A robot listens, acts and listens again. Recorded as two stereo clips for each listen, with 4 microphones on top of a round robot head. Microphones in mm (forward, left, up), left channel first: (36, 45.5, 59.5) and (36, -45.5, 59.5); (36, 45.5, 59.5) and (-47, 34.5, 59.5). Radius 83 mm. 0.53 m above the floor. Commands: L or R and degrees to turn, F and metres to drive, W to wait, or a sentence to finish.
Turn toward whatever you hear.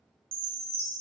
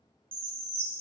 R105
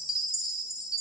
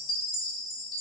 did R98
Facing the chime.